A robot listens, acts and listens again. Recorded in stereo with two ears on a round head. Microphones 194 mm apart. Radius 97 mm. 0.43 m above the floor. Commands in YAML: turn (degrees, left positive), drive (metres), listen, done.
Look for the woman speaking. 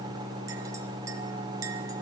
listen: true
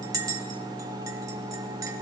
listen: true
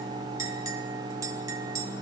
done: "I can't make out a woman speaking, only a clink."